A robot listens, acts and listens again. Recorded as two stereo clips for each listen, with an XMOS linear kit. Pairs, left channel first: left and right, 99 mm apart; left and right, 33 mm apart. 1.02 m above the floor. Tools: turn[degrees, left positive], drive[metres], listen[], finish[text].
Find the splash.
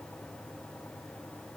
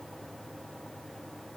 Action: listen[]
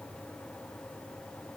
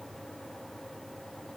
Action: listen[]
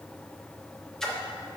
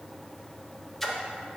Action: turn[30]
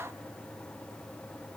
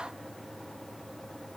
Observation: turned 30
Action: listen[]
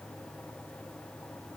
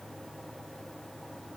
Action: finish[I heard a splash, but can't make it out now. It was about 25° right or 145° left.]